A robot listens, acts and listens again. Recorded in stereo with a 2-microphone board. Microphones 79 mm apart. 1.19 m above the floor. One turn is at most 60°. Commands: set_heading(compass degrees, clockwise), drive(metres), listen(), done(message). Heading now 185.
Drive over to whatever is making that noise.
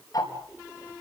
set_heading(135)
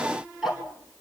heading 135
drive(1.0)
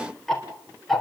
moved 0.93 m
drive(1.0)
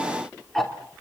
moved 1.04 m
drive(1.0)
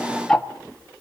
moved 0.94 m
set_heading(125)
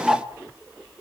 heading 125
drive(1.0)
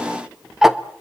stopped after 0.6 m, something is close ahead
done("I am next to the ticking.")